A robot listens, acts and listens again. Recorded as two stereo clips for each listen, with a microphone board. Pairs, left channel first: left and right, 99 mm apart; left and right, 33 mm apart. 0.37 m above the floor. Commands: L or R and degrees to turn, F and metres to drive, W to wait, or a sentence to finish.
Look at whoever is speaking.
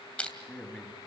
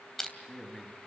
L30
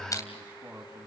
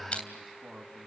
R20
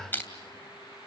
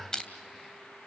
W
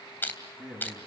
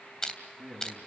Found it: a man speaking, straight ahead, 2 to 4 m away.